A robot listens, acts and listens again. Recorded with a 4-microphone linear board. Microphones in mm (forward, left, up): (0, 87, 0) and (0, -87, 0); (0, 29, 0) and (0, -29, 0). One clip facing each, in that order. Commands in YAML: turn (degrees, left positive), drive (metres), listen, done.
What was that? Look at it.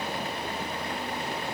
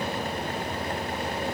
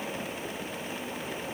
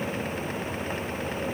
listen: true
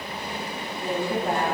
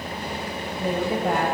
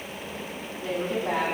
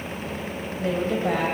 turn: -75
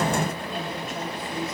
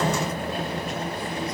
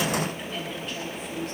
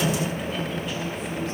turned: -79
listen: true
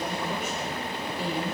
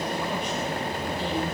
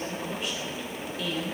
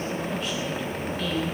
turn: 10
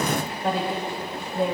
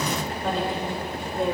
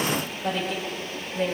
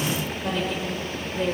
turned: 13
done: "Found it: a woman speaking, straight ahead, 2 to 4 m away."